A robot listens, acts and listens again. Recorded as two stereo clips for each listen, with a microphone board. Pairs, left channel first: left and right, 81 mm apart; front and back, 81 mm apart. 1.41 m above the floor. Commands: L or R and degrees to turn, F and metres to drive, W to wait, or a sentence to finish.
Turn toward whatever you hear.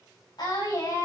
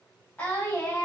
L70
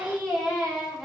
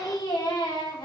Facing the singing.